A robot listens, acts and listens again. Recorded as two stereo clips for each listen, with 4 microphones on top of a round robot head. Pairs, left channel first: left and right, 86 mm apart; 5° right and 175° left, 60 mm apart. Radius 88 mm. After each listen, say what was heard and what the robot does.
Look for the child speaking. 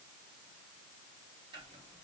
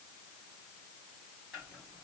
Keep listening.
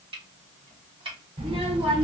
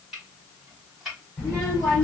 The child speaking: 85° right. Turn 85° right.
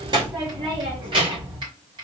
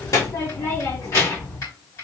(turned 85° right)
The child speaking is now 60° right. Turn 60° right.
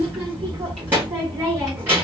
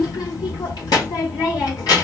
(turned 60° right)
The child speaking is now 20° right. Turn 20° right.
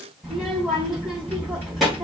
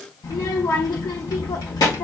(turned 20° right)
Found it: a child speaking, straight ahead, 1 to 2 m away.